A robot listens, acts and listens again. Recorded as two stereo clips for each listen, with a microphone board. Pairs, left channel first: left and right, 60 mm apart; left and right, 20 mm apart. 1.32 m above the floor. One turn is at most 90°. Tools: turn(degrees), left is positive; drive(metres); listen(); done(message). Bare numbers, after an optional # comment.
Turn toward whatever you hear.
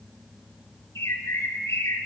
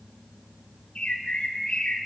# The bird: about 50° left or 130° left.
turn(50)
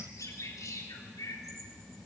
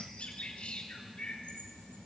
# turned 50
# So it is at 75° left.
turn(75)
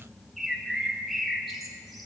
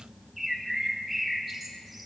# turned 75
done("Found it: a bird, straight ahead.")